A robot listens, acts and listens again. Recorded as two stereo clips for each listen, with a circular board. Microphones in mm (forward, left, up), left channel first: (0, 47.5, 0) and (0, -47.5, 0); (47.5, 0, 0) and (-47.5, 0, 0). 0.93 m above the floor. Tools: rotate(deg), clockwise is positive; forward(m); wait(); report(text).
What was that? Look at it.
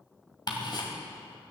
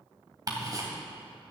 rotate(-130)
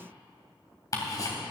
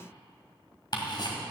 rotate(-40)
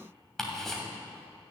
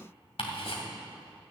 report("Found it: ticking, straight ahead.")